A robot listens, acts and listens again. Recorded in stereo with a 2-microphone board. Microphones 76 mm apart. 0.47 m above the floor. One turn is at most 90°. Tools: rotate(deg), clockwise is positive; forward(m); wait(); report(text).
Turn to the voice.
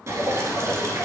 wait()
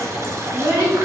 rotate(65)
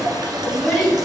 report("Found it: a child speaking, straight ahead.")